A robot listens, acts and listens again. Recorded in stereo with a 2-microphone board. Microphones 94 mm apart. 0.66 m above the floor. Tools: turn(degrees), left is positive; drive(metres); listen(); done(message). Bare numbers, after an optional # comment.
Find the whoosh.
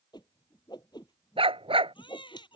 # The whoosh: about 50° left or 130° left.
turn(50)
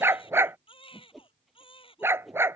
done("Found it: a whoosh, straight ahead.")